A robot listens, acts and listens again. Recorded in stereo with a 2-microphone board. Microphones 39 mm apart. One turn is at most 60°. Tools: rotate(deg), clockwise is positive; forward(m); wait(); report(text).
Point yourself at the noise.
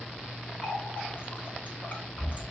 rotate(-50)
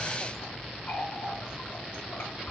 rotate(-60)
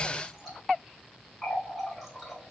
report("Facing the running tap, 2 to 4 m away.")